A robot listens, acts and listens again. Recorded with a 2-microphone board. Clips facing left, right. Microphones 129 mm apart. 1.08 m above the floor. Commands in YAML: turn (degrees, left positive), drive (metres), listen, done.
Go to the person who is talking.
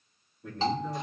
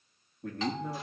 turn: -55
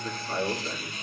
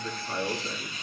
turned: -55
drive: 1.0
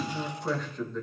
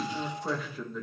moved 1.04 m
drive: 1.0
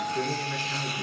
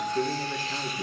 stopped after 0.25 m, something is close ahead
turn: -15
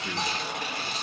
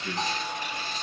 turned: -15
done: "Arrived at the man speaking, straight ahead."